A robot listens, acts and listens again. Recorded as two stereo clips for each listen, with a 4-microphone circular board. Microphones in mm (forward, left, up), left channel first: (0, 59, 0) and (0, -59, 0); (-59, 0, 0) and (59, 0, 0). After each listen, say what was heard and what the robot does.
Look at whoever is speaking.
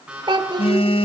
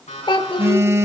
The child speaking: 135° right. Turn 135° right.
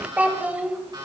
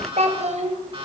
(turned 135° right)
The child speaking is now 15° right. Turn 15° right.
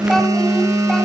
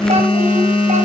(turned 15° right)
Keep listening.
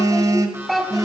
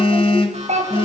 Found it: a child speaking, straight ahead, 2 to 4 m away.